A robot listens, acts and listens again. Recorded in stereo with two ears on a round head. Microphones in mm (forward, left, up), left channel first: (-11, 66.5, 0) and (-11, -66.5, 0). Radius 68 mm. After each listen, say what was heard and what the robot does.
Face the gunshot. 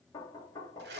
Keep listening.
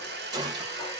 The gunshot: about 25° right or 155° right. Turn 25° right.
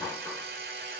Keep listening.
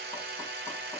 I heard a gunshot, but can't make it out now. It was about straight ahead or 130° right.